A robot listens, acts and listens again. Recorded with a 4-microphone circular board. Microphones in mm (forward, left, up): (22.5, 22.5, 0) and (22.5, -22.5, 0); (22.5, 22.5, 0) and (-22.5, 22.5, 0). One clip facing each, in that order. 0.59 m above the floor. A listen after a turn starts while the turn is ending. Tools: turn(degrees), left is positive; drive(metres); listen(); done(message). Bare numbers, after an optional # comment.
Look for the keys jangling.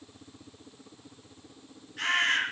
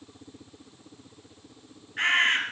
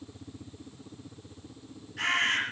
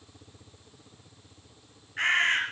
listen()
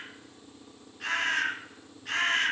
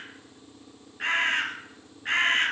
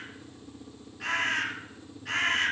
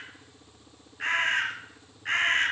listen()
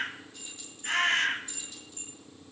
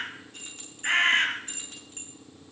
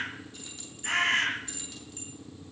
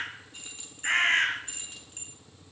# The keys jangling: 125° right.
turn(-125)
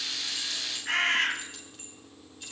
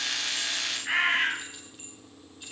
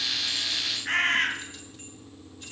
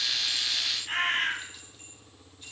listen()
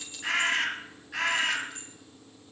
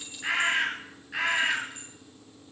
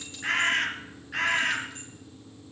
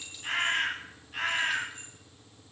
# The keys jangling is now 10° right.
turn(-10)
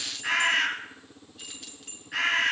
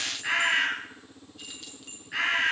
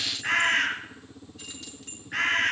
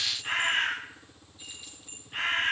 done("Facing the keys jangling.")